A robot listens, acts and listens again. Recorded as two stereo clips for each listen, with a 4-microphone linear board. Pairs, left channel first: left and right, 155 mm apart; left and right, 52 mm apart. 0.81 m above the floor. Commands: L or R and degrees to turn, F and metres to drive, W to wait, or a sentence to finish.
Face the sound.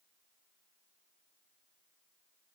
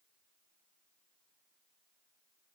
W
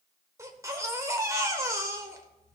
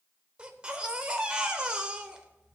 R20
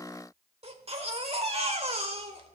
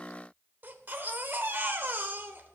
R140
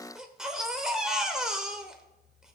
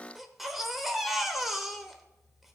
Found it: a baby crying, straight ahead.